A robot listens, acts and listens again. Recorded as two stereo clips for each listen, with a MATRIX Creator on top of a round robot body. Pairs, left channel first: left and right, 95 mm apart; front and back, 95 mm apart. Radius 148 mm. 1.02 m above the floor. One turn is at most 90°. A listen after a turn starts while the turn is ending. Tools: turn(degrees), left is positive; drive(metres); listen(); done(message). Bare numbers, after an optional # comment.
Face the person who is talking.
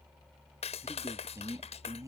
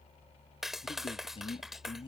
# The man speaking: 35° right.
turn(-35)
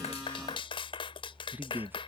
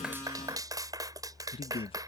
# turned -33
# The man speaking is now 20° right.
turn(-20)
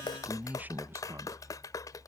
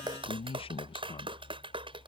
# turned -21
# The man speaking is now 30° right.
turn(-30)
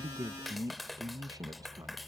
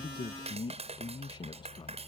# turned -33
# The man speaking is now 40° right.
turn(-40)
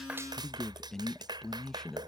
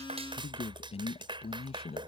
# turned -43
done("Found it: a man speaking, straight ahead.")